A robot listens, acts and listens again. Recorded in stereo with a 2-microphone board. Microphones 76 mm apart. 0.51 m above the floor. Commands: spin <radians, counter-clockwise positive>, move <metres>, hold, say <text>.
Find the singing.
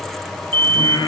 spin 1.31
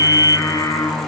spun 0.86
spin 0.96
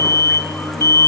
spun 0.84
hold
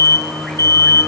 say Facing the singing.